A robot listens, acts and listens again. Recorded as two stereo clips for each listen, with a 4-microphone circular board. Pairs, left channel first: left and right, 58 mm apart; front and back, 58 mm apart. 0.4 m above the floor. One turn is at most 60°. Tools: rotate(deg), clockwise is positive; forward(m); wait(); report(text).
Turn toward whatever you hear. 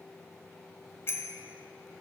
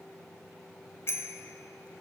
rotate(-45)
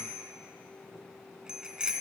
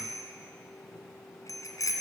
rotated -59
rotate(15)
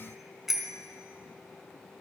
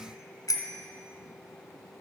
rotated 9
report("Facing the bicycle bell, 2 to 4 m away.")